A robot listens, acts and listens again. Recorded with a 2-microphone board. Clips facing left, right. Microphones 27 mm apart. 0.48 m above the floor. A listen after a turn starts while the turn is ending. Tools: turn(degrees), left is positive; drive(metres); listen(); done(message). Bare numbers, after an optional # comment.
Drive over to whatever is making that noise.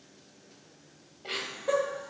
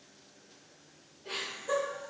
# The laughter: about 60° left or 120° left.
turn(60)
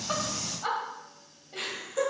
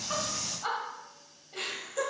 # So it is at 10° left.
turn(10)
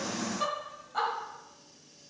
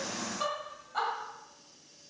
drive(1.0)
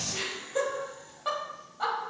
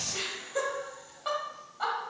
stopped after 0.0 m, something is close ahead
done("Something is in my way. I am facing the laughter but have not reached it.")